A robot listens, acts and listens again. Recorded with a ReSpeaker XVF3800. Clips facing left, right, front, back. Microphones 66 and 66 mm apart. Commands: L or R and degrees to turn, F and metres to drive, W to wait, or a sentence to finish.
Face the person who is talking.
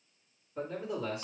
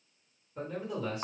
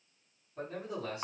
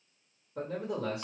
L170
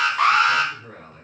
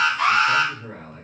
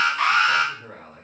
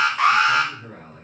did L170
R35
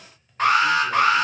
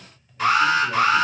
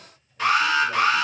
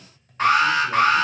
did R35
W
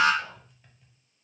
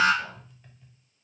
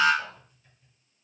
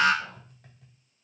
Found it: a man speaking, straight ahead, 2 to 4 m away.